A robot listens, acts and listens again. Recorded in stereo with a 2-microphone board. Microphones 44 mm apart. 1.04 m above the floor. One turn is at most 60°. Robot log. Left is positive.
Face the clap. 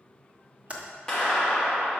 cmd yaw +30
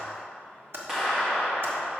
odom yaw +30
note: So it is at 15° right.
cmd yaw -15
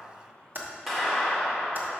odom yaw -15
end: Found it: a clap, straight ahead.